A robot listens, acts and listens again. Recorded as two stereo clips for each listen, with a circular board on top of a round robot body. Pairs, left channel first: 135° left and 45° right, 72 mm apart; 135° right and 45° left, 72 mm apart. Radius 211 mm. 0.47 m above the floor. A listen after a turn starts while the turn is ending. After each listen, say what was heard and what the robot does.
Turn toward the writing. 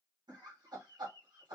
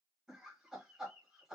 Keep listening.
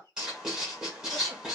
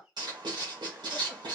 The writing: 35° left. Turn 35° left.
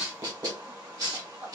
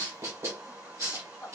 Found it: writing, straight ahead, 1 to 2 m away.